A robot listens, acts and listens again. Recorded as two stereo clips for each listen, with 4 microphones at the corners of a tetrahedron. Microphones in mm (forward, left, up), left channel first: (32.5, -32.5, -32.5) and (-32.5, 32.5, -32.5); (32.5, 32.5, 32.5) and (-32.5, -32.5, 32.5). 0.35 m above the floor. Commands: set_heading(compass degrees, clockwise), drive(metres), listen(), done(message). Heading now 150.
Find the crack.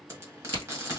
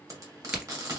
set_heading(5)
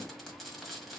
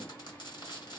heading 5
done("Facing where the crack came from. I can't hear it now.")